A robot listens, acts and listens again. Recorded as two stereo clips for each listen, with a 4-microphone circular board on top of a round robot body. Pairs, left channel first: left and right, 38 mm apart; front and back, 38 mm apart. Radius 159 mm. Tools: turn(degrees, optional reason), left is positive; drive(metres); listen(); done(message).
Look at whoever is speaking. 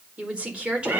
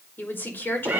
turn(degrees=-30, reason="The woman speaking: 30° right.")
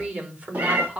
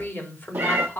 turn(degrees=-30, reason="The woman speaking is now 30° right.")
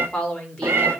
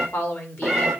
turn(degrees=20, reason="The woman speaking is now 20° left.")
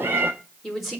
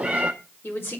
done("Found it: a woman speaking, straight ahead.")